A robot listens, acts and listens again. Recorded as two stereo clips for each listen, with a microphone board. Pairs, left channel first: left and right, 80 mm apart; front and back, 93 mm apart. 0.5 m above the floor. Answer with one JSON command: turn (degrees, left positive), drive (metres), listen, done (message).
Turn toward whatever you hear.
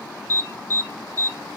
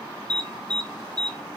{"turn": 150}
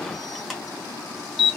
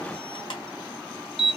{"done": "Facing the alarm."}